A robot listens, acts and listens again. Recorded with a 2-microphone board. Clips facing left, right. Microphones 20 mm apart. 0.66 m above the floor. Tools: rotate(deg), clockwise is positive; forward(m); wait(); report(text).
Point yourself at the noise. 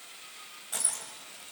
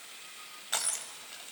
rotate(40)
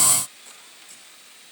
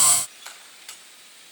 rotate(105)
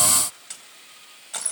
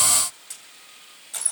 rotate(-15)
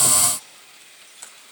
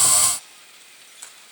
report("Found it: crushing, straight ahead.")